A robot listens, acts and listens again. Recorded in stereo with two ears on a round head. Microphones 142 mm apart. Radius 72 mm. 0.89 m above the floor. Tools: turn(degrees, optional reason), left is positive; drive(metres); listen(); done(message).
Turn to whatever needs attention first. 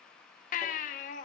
turn(degrees=50, reason="The baby crying: about 50° left or 130° left.")
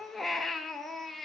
done("Facing the baby crying.")